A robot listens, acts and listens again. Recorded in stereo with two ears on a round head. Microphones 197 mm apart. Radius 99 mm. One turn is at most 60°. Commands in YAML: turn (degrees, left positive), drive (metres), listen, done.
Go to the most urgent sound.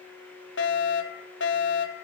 turn: 55
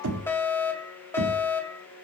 turn: 10
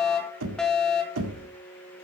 drive: 1.0
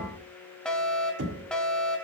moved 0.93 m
drive: 1.0
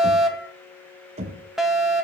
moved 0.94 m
drive: 1.0
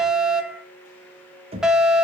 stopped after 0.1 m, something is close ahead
done: "I am next to the fire alarm."